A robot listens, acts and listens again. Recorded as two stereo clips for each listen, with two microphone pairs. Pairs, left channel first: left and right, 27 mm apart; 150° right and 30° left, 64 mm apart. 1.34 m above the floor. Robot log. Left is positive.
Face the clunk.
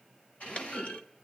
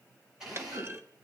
note: The clunk: 75° left.
cmd yaw +75
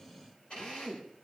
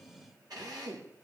end: I heard a clunk from this way, but can't make it out now.